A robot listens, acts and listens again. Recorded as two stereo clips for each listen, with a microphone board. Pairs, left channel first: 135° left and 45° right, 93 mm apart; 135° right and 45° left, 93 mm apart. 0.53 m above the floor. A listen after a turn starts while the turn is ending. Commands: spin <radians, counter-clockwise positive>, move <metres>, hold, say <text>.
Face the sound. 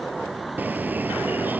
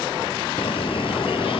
spin -2.01
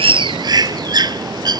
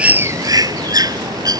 say Facing the bird.